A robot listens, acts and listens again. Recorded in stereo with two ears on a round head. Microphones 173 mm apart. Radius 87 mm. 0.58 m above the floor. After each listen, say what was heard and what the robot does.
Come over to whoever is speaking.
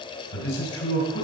Turn 90° left.
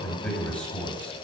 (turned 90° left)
Drive 1.0 m forward.
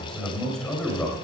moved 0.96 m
Drive 1.0 m forward.
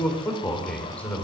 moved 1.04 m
The man speaking is now 10° left. Turn 10° left.
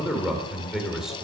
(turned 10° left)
Drive 1.0 m forward.
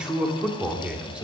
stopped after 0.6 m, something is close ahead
Arrived at the man speaking, straight ahead.